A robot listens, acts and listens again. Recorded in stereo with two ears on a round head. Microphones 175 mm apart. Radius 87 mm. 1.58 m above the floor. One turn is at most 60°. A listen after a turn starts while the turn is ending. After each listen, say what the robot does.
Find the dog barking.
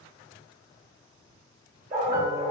Turn 40° right.
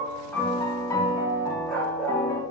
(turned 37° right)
Found it: a dog barking, straight ahead.